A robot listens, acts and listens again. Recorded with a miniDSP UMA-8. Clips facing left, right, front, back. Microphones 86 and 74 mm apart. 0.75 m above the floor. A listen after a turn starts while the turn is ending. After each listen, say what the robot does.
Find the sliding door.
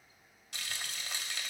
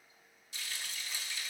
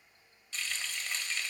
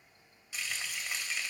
Keep listening.
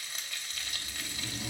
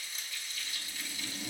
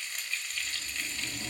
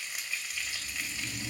Turn 15° left.
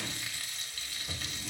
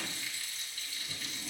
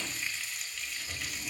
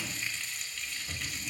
Keep listening.
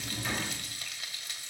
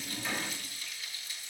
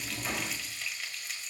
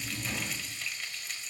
Facing the sliding door.